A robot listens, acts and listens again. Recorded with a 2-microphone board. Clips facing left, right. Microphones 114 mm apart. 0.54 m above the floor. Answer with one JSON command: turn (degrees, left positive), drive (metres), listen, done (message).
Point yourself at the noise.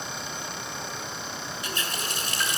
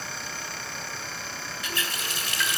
{"turn": 40}
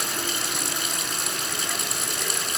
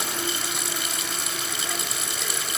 {"done": "Found it: a running tap, straight ahead, 2 to 4 m away."}